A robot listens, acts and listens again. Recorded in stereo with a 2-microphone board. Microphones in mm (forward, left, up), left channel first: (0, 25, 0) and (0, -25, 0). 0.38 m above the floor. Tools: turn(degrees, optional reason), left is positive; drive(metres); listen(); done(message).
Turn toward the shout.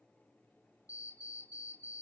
listen()
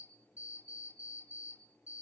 listen()
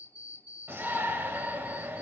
turn(degrees=-45, reason="The shout: about 45° right or 135° right.")
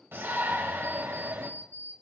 turn(degrees=-75, reason="So it is at 75° right.")
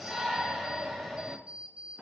turn(degrees=-10, reason="The shout is now 10° right.")
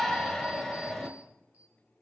done("Found it: a shout, straight ahead, 1 to 2 m away.")